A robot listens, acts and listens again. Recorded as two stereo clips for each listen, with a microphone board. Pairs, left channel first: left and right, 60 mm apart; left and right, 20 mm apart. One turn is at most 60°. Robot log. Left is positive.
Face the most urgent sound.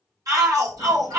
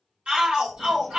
cmd yaw -60
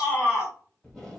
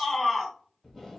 note: So it is at 20° right.
cmd yaw -20
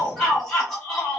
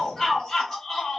end: Facing the shout, 1 to 2 m away.